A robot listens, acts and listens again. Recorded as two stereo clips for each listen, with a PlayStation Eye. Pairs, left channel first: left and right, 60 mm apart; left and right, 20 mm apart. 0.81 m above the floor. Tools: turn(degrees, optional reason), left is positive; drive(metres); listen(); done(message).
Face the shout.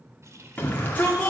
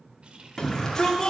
turn(degrees=30, reason="The shout: about 30° left or 150° left.")
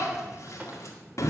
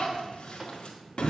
turn(degrees=115, reason="So it is at 115° left.")
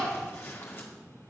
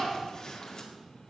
turn(degrees=45, reason="The shout is now 45° left.")
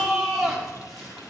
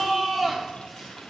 done("Found it: a shout, straight ahead.")